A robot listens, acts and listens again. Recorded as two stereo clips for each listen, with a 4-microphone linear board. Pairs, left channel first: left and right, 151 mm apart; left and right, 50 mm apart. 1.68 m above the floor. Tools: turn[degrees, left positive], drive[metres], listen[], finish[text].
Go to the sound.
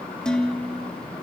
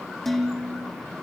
Action: turn[30]
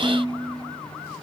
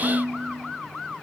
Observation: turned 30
Thought: So it is at 25° right.
Action: turn[-25]
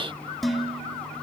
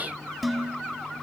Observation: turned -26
Action: drive[1.0]
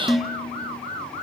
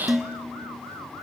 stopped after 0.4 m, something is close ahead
Action: finish[Blocked. The dishes clattering is further on, straight ahead.]